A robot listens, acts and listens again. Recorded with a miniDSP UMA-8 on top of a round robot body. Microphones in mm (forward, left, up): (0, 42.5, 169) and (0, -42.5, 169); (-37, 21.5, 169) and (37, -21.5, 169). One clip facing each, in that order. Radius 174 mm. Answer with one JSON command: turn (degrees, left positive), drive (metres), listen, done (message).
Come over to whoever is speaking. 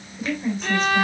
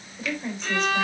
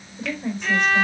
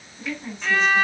{"turn": 175}
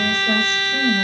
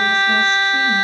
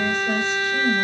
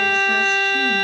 {"listen": true}
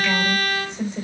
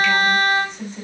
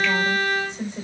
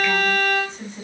{"turn": 80}
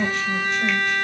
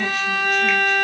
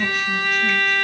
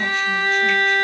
{"listen": true}
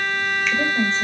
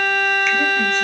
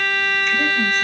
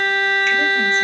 {"listen": true}
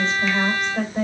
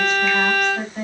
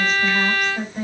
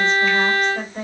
{"turn": 30}
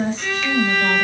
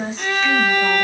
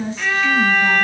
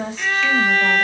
{"drive": 1.0}
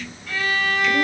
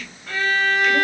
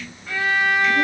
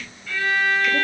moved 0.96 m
{"listen": true}
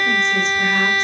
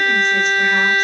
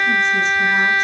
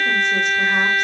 {"listen": true}
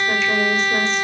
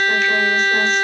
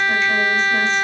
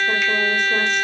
{"done": "Facing where the woman speaking came from. I can't hear it now. I did not reach it."}